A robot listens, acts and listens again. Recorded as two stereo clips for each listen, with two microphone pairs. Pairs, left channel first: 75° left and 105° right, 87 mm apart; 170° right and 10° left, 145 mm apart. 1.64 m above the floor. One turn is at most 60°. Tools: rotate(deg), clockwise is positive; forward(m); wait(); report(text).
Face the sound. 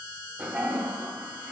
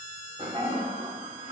rotate(40)
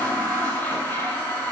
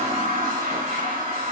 rotate(-10)
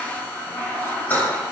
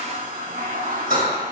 report("Found it: a toilet flushing, straight ahead, 2 to 4 m away.")